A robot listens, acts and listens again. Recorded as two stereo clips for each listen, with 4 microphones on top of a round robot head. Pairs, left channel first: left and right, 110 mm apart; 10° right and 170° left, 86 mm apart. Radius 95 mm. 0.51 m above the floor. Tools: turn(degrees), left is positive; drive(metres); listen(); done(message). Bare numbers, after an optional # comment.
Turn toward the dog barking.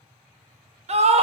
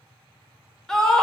listen()
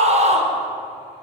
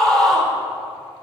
listen()
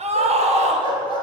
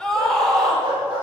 # The dog barking: 130° right.
turn(-130)
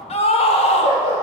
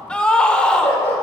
# The dog barking is now 55° left.
turn(55)
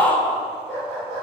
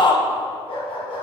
done("Found it: a dog barking, straight ahead.")